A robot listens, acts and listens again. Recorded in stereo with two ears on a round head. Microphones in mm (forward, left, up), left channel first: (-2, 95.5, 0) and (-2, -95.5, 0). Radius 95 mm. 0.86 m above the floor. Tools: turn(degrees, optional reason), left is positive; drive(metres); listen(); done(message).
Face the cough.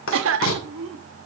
turn(degrees=-65, reason="The cough: about 65° right or 115° right.")
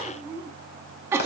turn(degrees=-15, reason="So it is at 15° right.")
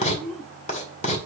done("Facing the cough.")